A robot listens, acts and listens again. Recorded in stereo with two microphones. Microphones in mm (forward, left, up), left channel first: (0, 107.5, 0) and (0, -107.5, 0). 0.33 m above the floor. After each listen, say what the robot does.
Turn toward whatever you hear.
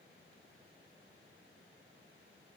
Keep listening.
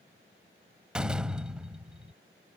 Turn 30° right.
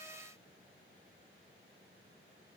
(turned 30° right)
Keep listening.
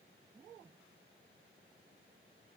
I heard a door slam, but can't make it out now. It was about 25° left or 145° right.